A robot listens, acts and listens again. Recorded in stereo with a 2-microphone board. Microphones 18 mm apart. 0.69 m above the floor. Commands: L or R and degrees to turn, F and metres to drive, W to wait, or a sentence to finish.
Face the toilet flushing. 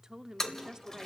L30
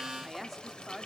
L120
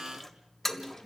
L10
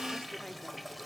Found it: a toilet flushing, straight ahead.